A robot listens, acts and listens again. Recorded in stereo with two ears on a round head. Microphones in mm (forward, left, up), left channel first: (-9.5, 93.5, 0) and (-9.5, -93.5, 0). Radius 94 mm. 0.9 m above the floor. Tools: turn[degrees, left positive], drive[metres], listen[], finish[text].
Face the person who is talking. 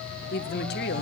Thought: The woman speaking: about 55° left or 125° left.
Action: turn[55]
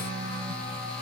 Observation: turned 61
Action: listen[]
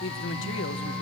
Thought: So it is at 65° left.
Action: turn[65]
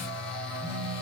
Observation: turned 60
Action: listen[]
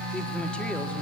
Action: listen[]
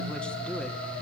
Action: finish[I heard a woman speaking from this way, but can't make it out now.]